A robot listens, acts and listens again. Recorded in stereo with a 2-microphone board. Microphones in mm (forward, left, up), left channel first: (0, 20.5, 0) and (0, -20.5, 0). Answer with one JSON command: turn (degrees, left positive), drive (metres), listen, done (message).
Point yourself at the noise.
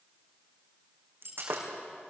{"turn": -65}
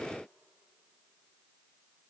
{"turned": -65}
{"listen": true}
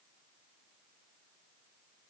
{"done": "I heard breaking glass, but can't make it out now. It was about straight ahead or 50° right."}